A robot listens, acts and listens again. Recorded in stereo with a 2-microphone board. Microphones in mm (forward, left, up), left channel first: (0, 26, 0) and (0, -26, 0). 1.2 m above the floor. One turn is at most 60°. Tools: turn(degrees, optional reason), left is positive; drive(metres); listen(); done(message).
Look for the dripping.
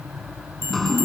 turn(degrees=30)
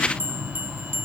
listen()
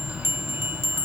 listen()
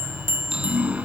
turn(degrees=-20, reason="So it is at 20° right.")
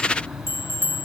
listen()
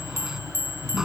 done("Facing the dripping.")